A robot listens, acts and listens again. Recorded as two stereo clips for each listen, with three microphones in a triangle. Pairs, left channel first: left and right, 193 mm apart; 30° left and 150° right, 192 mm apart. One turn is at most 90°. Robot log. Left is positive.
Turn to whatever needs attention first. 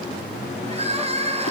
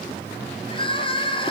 note: The crying: 35° right.
cmd yaw -35
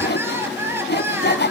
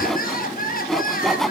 note: The crying is now 15° right.
cmd yaw -15
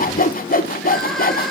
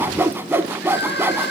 end: Found it: crying, straight ahead, 2 to 4 m away.